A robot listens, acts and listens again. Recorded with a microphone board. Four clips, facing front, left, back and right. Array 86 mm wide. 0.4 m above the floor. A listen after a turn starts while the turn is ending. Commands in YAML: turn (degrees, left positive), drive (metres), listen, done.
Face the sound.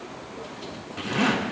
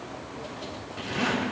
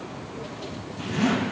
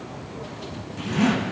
turn: 15
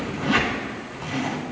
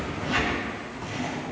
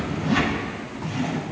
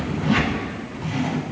done: "Facing the zipper, over 4 m away."